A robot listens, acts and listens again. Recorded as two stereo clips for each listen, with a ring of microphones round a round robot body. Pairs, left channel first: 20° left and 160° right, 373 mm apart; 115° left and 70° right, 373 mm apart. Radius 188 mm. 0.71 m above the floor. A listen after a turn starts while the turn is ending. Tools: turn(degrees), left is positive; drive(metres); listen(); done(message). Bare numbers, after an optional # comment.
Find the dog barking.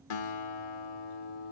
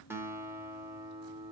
listen()
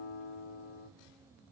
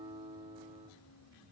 listen()
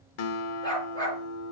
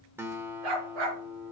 # The dog barking: 55° right.
turn(-55)
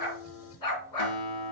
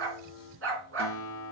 # The dog barking is now 10° right.
turn(-10)
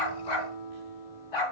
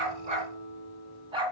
# The dog barking is now 10° left.
turn(10)
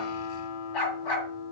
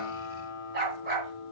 done("Facing the dog barking, 2 to 4 m away.")